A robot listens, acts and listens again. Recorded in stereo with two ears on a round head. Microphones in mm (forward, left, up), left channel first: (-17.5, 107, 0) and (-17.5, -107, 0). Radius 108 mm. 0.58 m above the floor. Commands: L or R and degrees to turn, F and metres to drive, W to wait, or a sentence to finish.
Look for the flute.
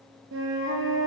R60
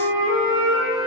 R55
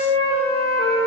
R25
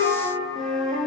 Found it: a flute, straight ahead.